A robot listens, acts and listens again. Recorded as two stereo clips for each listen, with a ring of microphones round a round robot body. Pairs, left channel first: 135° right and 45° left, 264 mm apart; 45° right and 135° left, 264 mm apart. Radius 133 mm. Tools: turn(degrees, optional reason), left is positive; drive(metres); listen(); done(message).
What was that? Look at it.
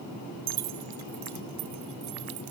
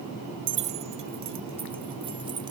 turn(degrees=70, reason="The keys jangling: 70° left.")
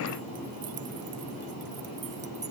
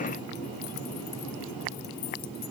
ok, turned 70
listen()
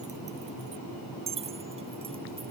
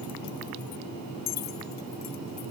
turn(degrees=-20, reason="The keys jangling is now 20° right.")
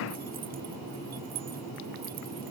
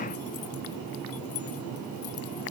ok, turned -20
listen()
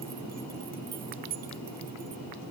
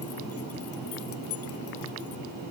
turn(degrees=-10, reason="The keys jangling is now 10° right.")
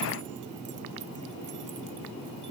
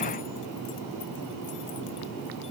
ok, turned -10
listen()
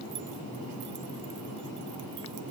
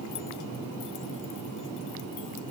listen()
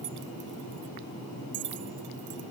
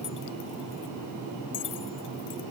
done("Found it: keys jangling, straight ahead.")